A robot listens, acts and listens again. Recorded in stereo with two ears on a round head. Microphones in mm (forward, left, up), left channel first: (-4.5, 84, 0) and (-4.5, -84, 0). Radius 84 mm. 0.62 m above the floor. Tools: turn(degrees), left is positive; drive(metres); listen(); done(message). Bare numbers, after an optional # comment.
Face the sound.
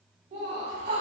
# The laughter: about 30° right or 150° right.
turn(-30)
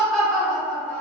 # So it is at 10° left.
turn(10)
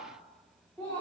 # The laughter is now 15° left.
turn(15)
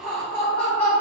# The laughter is now 10° left.
turn(10)
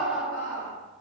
# The laughter is now 10° left.
turn(10)
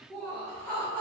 done("Facing the laughter.")